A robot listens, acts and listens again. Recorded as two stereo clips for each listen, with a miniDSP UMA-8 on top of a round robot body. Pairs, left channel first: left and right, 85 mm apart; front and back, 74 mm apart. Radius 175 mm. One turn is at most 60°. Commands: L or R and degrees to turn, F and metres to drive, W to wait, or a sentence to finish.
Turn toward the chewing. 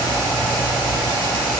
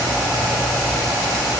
W
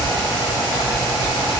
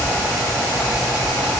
W
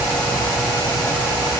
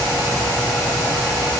I can't make out chewing to turn to.